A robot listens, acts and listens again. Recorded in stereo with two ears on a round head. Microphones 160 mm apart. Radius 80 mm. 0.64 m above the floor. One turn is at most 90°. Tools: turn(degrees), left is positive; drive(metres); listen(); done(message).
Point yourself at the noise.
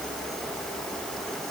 listen()
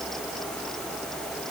listen()
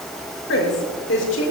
turn(degrees=75)
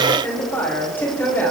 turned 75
turn(degrees=10)
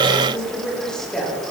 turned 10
done("Facing the woman speaking.")